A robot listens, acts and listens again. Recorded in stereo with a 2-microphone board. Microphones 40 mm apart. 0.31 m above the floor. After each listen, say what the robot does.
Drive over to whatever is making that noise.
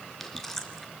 Turn 30° left.
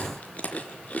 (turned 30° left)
Turn 140° left.
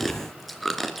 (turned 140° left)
Drive 1.0 m forward.
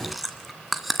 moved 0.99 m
Drive 1.0 m forward.
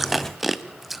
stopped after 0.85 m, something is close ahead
Arrived at the chewing, straight ahead.